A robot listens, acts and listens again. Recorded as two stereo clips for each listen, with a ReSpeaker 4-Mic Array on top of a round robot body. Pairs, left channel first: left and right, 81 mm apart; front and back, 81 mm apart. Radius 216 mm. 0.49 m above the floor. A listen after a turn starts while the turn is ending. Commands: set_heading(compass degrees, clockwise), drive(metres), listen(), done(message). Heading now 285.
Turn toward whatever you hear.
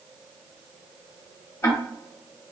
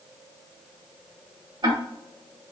set_heading(140)
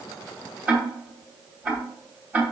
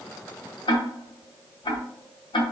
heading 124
set_heading(139)
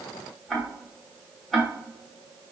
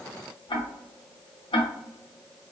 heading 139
done("Found it: ticking, straight ahead, under 1 m away.")